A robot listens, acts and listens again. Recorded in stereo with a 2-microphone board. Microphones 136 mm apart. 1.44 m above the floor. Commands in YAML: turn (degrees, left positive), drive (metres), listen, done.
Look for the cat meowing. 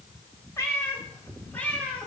turn: 30
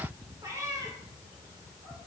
turn: -25
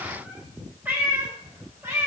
turn: -20
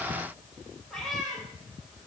done: "Found it: a cat meowing, straight ahead, 2 to 4 m away."